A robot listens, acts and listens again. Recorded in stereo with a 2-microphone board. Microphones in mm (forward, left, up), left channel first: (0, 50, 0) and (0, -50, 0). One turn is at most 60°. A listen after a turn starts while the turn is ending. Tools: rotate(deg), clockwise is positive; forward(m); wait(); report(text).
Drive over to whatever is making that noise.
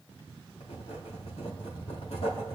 rotate(-60)
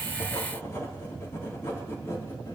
rotate(-25)
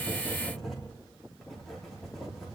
forward(1.0)
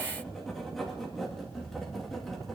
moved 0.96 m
forward(1.0)
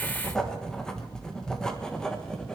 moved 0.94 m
forward(1.0)
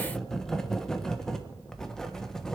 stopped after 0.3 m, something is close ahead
report("I am next to the writing.")